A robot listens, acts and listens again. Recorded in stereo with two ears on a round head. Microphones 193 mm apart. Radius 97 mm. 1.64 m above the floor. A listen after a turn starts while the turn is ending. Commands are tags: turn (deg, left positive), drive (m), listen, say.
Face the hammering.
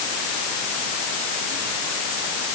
<listen/>
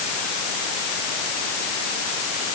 <listen/>
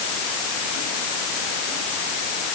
<say>I can't make out hammering.</say>